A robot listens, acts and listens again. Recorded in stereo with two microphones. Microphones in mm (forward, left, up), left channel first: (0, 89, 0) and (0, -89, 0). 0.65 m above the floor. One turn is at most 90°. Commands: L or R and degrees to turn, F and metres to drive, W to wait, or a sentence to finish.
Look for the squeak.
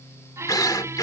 R15
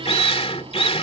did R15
W
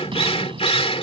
R90
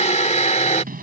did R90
R55
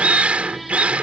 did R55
W
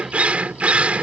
W
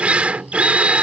Facing where the squeak came from. I can't hear it now.